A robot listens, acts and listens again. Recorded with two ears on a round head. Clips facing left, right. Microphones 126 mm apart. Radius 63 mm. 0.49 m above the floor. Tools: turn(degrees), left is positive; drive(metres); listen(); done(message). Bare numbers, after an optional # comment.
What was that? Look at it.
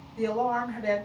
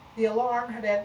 # The woman speaking: about 20° right or 160° right.
turn(-20)
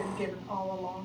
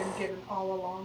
done("Found it: a woman speaking, straight ahead.")